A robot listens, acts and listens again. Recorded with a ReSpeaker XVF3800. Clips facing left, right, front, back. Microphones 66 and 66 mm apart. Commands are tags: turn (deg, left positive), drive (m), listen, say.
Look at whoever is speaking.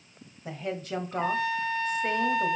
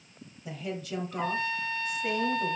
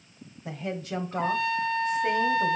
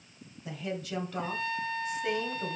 <turn deg="45"/>
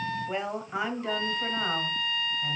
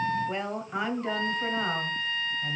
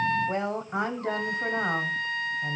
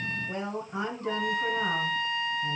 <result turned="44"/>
<say>Facing the woman speaking.</say>